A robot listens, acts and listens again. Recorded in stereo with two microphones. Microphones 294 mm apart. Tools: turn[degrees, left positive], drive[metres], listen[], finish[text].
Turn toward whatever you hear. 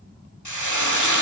Action: turn[90]
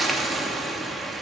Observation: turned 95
Action: finish[Found it: frying, straight ahead, 2 to 4 m away.]